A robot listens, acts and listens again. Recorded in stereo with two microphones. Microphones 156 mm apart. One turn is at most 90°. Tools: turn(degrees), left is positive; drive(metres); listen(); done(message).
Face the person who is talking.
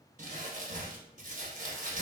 listen()
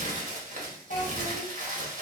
turn(degrees=60)
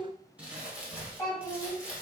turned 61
turn(degrees=25)
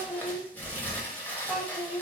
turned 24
done("Facing the child speaking, 1 to 2 m away.")